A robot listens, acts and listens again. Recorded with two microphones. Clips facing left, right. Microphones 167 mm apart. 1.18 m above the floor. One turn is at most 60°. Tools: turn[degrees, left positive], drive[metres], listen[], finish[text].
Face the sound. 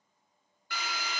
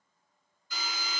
Thought: The drill: about 65° left or 115° left.
Action: turn[60]
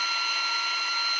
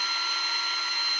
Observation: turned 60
Thought: So it is at 10° left.
Action: turn[10]
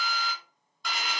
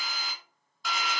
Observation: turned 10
Action: finish[Found it: a drill, straight ahead.]